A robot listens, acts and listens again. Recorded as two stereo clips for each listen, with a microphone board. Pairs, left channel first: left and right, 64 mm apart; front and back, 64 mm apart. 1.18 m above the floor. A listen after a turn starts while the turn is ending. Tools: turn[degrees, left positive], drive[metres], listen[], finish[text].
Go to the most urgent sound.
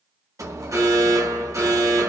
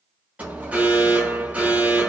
Thought: The alarm: 115° right.
Action: turn[-115]
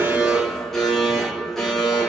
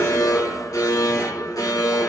Action: drive[1.0]
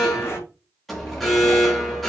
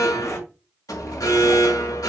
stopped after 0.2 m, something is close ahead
Action: finish[Blocked. The alarm is further on, straight ahead.]